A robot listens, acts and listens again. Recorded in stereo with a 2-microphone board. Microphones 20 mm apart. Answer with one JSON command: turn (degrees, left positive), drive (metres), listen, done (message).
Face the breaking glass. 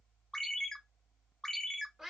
{"listen": true}
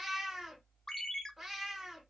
{"listen": true}
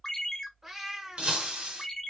{"turn": -65}
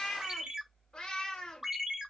{"listen": true}
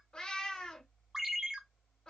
{"done": "I heard breaking glass, but can't make it out now. It was about straight ahead or 50° right."}